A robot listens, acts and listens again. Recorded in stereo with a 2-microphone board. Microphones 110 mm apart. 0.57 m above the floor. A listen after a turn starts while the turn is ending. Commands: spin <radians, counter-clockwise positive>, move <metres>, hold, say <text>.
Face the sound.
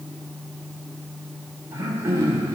spin -0.44
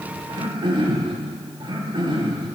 spin -2.18
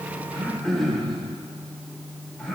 say Facing the throat clearing, 1 to 2 m away.